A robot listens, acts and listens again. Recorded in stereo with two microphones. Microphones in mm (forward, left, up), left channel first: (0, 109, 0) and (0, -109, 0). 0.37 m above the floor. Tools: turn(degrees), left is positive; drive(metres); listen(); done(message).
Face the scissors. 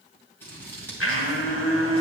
turn(degrees=30)
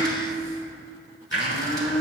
listen()
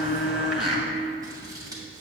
turn(degrees=-20)
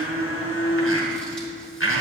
listen()
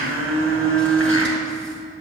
listen()
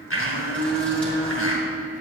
done("I heard scissors from this way, but can't make it out now.")